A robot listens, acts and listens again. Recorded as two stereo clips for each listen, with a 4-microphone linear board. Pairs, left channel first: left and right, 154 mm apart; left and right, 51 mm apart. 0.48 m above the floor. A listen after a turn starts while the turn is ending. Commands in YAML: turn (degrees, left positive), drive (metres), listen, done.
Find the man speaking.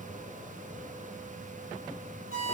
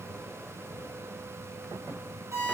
listen: true
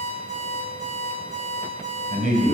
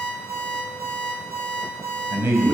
turn: -65
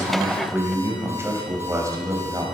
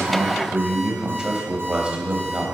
turn: -25
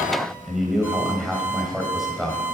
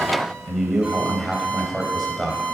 done: "Facing the man speaking."